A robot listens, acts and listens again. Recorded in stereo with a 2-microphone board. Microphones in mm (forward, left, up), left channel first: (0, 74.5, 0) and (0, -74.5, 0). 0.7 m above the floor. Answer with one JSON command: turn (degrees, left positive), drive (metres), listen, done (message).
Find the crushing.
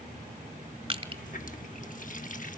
{"turn": -35}
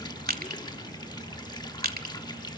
{"turn": -110}
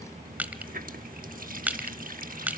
{"turn": -10}
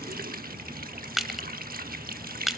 {"done": "Facing the crushing, 1 to 2 m away."}